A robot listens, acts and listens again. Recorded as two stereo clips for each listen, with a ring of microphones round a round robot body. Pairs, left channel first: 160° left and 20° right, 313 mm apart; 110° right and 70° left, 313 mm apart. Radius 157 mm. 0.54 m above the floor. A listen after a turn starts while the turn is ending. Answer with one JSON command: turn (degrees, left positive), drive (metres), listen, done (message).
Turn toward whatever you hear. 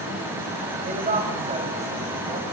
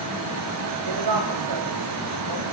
{"turn": 45}
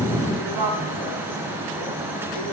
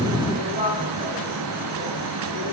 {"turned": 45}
{"done": "Facing the woman speaking, over 4 m away."}